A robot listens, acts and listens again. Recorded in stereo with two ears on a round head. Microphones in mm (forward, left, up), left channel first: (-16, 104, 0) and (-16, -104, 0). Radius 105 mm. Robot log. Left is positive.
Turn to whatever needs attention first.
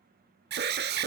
note: The alarm: about 45° right or 135° right.
cmd yaw -45
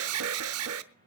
note: So it is at 80° right.
cmd yaw -80
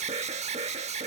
note: The alarm is now 30° right.
cmd yaw -30
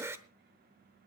note: The alarm is now 10° right.
cmd yaw -10
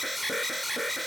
end: Found it: an alarm, straight ahead.